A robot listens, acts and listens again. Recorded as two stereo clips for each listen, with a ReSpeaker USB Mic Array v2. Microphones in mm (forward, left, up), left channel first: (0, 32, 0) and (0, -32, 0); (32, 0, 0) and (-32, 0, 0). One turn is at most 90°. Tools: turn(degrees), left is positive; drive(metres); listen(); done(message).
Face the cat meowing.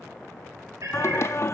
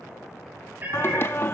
turn(degrees=-90)
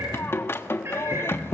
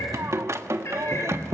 turn(degrees=-45)
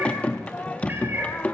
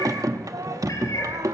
turn(degrees=-35)
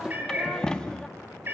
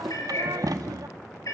turn(degrees=-35)
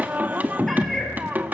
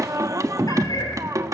done("Found it: a cat meowing, straight ahead.")